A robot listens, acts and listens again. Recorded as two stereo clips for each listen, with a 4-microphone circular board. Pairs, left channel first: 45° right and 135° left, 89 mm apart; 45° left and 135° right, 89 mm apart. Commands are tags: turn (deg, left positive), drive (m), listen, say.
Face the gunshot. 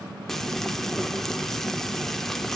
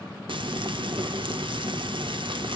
<listen/>
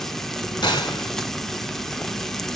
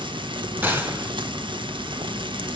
<turn deg="-70"/>
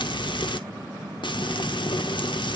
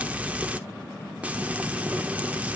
<say>I heard a gunshot from this way, but can't make it out now.</say>